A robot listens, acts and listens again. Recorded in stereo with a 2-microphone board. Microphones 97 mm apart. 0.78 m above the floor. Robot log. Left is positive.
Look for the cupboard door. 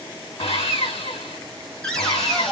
cmd yaw +30
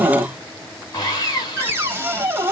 note: So it is at 25° right.
cmd yaw -25
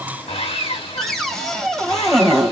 end: Facing the cupboard door.